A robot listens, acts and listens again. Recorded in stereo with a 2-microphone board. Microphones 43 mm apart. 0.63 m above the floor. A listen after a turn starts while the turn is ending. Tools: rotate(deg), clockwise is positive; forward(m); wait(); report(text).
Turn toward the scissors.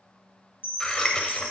rotate(-20)
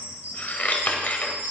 rotate(-140)
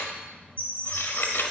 rotate(-60)
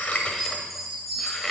report("Found it: scissors, straight ahead.")